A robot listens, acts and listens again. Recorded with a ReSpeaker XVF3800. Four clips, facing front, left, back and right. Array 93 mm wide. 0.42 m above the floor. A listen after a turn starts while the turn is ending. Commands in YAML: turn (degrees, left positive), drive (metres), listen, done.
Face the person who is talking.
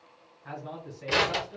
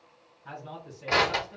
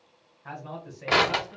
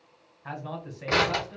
turn: -100
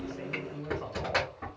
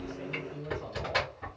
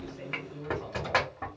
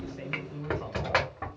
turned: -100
turn: -40
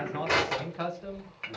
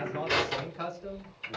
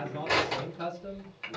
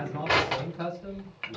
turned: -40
turn: 10
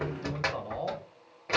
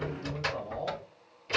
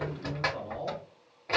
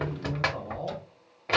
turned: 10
done: "Facing the man speaking, 1 to 2 m away."